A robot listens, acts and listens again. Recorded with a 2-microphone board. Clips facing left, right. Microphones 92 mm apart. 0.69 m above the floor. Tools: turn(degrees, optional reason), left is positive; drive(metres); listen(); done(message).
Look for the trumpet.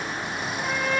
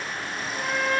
turn(degrees=-65, reason="The trumpet: about 65° right or 115° right.")
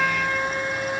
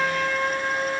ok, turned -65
turn(degrees=-50, reason="So it is at 50° right.")
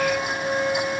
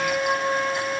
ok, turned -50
turn(degrees=-10, reason="The trumpet is now 10° right.")
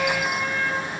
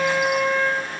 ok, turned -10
done("Facing the trumpet.")